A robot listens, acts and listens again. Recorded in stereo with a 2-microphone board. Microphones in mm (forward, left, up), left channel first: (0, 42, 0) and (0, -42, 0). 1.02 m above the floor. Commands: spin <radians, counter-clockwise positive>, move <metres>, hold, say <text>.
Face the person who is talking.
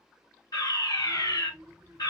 spin -0.96
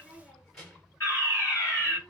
say Facing the child speaking, 1 to 2 m away.